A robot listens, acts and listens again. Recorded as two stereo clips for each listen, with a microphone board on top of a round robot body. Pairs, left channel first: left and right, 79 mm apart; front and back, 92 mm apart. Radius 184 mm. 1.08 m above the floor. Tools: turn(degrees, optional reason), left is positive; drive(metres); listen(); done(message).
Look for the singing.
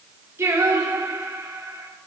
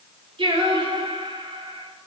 turn(degrees=-145, reason="The singing: 145° right.")
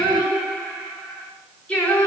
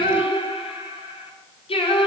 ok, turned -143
turn(degrees=15, reason="The singing is now 15° left.")
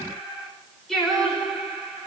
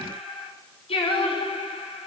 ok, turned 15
done("Facing the singing.")